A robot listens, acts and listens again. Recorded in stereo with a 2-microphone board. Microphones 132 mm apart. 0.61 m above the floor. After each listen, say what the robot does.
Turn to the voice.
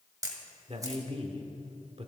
Turn 50° right.
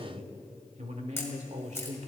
Turn 75° right.
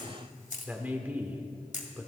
Turn 15° right.
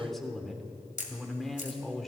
Found it: a man speaking, straight ahead.